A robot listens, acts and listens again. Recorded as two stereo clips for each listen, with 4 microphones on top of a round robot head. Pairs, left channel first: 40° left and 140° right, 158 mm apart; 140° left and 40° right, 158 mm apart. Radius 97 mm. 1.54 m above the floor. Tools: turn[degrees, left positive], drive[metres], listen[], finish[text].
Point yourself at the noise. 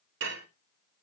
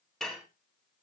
Thought: The dishes clattering: 135° right.
Action: turn[-135]
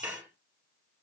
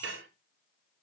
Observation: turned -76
Thought: The dishes clattering is now 55° right.
Action: turn[-55]
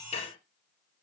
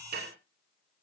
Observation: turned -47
Thought: The dishes clattering is now 10° right.
Action: turn[-10]
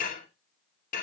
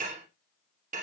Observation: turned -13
Action: finish[Found it: dishes clattering, straight ahead.]